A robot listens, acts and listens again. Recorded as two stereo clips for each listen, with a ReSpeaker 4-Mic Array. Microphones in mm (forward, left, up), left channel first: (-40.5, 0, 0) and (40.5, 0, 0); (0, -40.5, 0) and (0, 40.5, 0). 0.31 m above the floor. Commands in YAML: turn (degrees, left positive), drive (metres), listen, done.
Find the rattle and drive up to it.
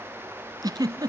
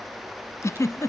listen: true
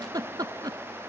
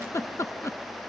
listen: true
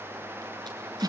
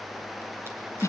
done: "I can't make out a rattle to turn to."